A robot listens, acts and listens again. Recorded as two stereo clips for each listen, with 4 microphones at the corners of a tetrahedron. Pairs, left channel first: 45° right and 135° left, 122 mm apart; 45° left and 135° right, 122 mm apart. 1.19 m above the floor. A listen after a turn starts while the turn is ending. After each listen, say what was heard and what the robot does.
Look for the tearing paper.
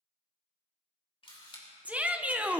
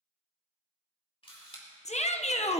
Keep listening.
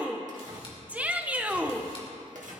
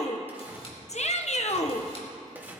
The tearing paper: 150° left. Turn 150° left.
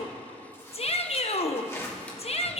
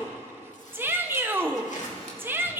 The tearing paper is now 25° left. Turn 25° left.
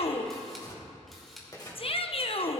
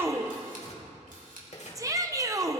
The tearing paper is now 15° left. Turn 15° left.
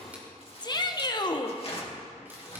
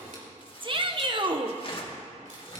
Facing the tearing paper.